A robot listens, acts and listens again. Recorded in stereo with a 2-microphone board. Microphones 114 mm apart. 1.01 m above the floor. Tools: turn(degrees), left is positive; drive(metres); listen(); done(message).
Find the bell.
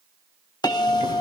turn(degrees=35)
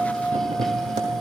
done("Found it: a bell, straight ahead, 1 to 2 m away.")